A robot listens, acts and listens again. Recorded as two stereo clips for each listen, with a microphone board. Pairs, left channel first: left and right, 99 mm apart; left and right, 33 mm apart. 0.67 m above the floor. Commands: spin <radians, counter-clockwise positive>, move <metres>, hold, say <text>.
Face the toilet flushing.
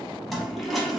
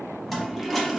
spin 0.52
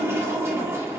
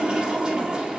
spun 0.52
spin -0.61
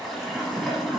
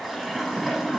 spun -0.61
say Found it: a toilet flushing, straight ahead, under 1 m away.